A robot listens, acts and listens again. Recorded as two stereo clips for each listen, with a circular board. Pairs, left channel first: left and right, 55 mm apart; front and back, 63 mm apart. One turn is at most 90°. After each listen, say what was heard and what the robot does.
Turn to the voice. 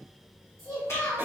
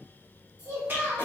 The child speaking: 115° right. Turn 90° right.
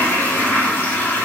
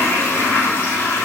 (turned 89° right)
Nothing new. It was at 25° right. Turn 25° right.
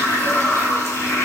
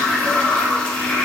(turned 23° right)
Keep listening.
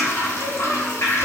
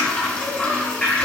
I heard a child speaking from this way, but can't make it out now.